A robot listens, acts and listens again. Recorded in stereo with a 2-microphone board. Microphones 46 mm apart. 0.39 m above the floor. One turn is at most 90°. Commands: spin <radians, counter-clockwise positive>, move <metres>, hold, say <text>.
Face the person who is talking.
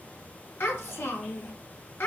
spin 1.22
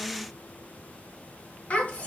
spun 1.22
spin 0.61
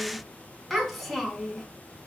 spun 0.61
say Facing the child speaking, 2 to 4 m away.